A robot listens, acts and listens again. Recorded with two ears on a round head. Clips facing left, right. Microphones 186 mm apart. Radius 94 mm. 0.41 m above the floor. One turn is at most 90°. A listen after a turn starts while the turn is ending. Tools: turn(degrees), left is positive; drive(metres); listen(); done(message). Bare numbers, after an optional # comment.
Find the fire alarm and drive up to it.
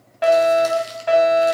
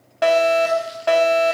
# The fire alarm: about 55° right or 125° right.
turn(-55)
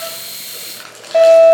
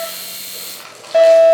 # So it is at 10° right.
turn(-10)
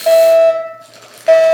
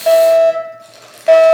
drive(1.0)
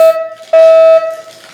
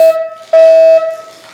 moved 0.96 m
drive(1.0)
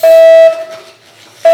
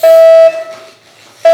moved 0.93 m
drive(1.0)
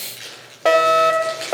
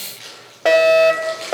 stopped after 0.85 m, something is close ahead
# The fire alarm is now 15° right.
turn(-15)
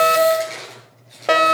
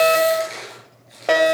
done("I am next to the fire alarm.")